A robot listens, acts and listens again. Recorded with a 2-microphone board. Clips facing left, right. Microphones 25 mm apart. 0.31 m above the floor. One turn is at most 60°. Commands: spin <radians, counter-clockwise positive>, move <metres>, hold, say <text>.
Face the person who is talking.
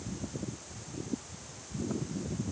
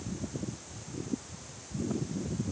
hold
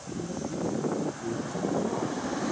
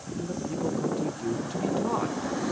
spin -0.96
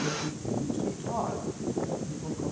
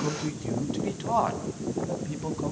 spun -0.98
spin -1.05
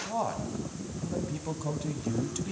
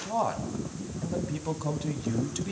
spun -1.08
spin -0.26
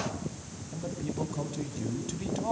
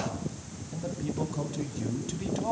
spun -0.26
say Found it: a man speaking, straight ahead.